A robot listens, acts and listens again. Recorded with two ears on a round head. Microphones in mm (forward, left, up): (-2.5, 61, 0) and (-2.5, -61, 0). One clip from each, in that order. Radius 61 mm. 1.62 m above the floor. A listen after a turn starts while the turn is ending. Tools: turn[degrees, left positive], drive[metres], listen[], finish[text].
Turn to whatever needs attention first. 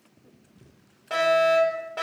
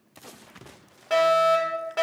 Thought: The fire alarm: about 20° right or 160° right.
Action: turn[-20]
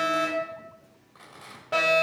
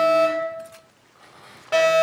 Thought: So it is at 140° right.
Action: turn[-140]
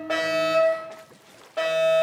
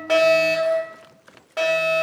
Thought: The fire alarm is now 35° right.
Action: turn[-35]
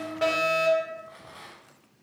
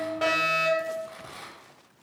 Action: finish[Facing the fire alarm.]